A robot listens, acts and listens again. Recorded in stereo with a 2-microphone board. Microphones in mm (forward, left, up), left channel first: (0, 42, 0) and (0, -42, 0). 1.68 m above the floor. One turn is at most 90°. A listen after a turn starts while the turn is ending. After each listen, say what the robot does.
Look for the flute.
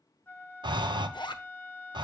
Turn 25° left.
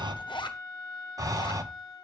Turn 90° left.
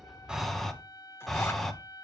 Turn 75° left.
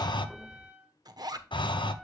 Turn 15° right.
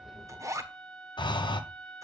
Found it: a flute, straight ahead, 1 to 2 m away.